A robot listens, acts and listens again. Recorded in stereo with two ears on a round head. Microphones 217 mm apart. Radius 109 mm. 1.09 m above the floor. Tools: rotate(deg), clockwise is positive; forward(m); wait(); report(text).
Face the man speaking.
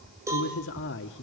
rotate(-50)
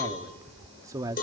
rotate(15)
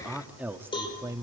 rotate(15)
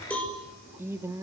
rotate(15)
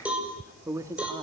rotate(15)
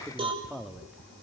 report("Facing the man speaking, 1 to 2 m away.")